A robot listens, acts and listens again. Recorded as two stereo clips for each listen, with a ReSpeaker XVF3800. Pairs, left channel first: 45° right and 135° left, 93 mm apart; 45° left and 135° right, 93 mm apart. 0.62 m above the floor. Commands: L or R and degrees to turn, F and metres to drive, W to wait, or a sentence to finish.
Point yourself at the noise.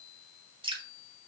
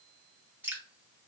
L155
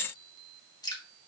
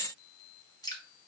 Facing the dripping, 1 to 2 m away.